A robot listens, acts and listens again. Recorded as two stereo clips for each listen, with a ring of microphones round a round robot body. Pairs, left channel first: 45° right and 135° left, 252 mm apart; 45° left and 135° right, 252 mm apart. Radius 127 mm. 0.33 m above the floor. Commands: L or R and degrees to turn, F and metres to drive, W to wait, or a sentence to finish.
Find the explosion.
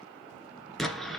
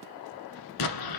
L45
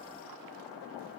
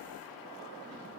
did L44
I heard an explosion from this way, but can't make it out now.